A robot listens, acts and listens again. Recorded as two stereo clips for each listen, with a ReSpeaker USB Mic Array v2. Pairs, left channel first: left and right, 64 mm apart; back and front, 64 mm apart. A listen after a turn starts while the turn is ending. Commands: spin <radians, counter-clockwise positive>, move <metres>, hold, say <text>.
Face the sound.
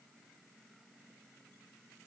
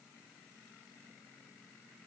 hold
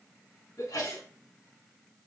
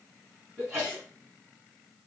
spin 1.40
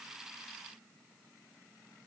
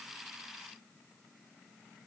say I heard a sneeze from this way, but can't make it out now.